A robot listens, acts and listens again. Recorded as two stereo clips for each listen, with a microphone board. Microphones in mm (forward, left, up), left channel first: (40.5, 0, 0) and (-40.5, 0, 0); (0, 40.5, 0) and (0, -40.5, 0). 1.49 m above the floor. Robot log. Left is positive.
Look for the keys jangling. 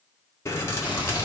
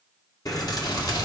note: The keys jangling: 55° left.
cmd yaw +55
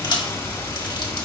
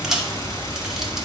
end: Facing the keys jangling, 1 to 2 m away.